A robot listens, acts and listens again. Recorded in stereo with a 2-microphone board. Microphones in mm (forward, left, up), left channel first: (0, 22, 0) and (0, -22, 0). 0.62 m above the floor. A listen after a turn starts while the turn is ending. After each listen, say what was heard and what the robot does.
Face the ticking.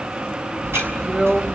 The ticking: about 70° right or 110° right. Turn 70° right.
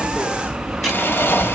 Facing the ticking, over 4 m away.